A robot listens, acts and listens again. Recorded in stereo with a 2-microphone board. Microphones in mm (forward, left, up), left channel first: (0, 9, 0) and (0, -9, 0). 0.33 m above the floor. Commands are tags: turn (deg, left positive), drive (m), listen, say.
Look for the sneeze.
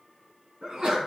<turn deg="-55"/>
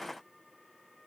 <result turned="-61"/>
<listen/>
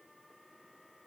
<say>I heard a sneeze, but can't make it out now. It was about 5° left or 60° right.</say>